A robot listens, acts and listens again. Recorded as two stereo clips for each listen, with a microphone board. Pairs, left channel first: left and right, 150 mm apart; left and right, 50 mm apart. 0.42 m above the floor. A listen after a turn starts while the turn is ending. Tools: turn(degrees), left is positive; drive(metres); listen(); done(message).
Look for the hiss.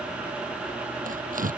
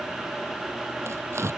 listen()
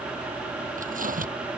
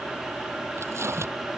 listen()
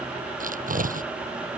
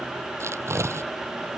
done("I can't make out a hiss, only tearing paper.")